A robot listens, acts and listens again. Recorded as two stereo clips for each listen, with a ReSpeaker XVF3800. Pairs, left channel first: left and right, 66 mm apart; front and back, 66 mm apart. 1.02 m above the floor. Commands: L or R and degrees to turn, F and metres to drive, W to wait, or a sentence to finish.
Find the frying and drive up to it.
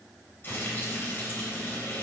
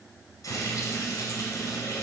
L35
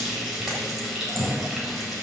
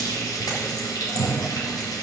F1.0
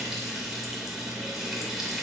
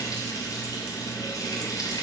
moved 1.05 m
F1.0
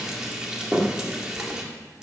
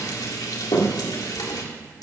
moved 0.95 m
R10
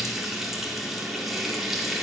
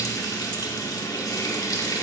F1.0
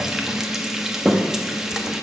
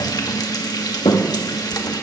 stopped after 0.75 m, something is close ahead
R10
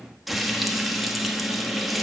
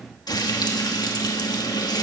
Arrived at the frying, straight ahead.